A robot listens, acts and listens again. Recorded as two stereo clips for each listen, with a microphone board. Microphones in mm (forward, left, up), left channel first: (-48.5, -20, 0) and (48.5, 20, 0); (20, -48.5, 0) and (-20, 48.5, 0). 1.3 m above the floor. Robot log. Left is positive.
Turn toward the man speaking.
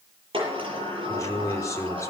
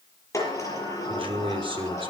note: The man speaking: 145° left.
cmd yaw +145
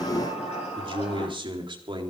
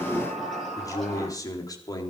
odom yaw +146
note: The man speaking is now 15° right.
cmd yaw -15
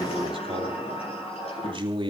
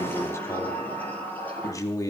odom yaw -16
note: The man speaking is now 10° right.
cmd yaw -10
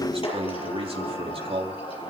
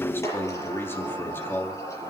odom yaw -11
end: Facing the man speaking, 2 to 4 m away.